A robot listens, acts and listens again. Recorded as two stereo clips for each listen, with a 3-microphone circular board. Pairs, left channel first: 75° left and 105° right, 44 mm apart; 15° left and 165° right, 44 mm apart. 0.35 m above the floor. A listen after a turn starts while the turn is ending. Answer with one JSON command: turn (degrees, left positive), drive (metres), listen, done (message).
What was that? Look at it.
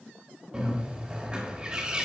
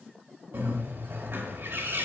{"turn": -165}
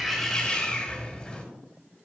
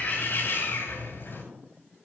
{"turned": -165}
{"turn": 15}
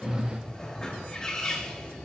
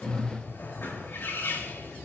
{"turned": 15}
{"turn": 10}
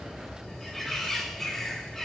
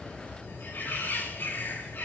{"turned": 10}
{"done": "Facing the bird."}